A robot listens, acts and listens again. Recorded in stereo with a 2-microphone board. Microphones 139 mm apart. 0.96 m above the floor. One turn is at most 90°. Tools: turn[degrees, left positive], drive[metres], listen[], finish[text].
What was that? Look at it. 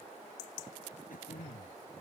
Thought: The throat clearing: about 75° left or 105° left.
Action: turn[75]
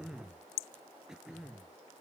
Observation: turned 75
Action: finish[Facing the throat clearing.]